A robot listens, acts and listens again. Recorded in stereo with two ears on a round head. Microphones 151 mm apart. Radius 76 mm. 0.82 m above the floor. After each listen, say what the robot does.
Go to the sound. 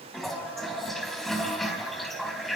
Turn 30° left.
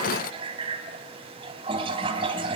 Turn 30° right.
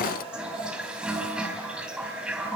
Drive 1.0 m forward.
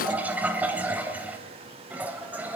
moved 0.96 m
Turn 10° right.
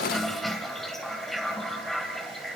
Drive 1.0 m forward.
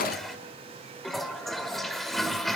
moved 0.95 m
Drive 1.0 m forward.
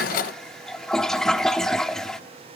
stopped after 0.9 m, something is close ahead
Arrived at the toilet flushing, straight ahead.